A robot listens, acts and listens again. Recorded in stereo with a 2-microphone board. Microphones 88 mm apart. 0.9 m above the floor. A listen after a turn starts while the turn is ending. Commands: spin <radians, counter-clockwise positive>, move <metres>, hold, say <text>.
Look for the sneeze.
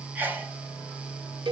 spin -0.35
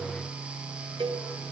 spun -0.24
hold
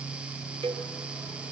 say I heard a sneeze, but can't make it out now. It was about 5° right or 145° right.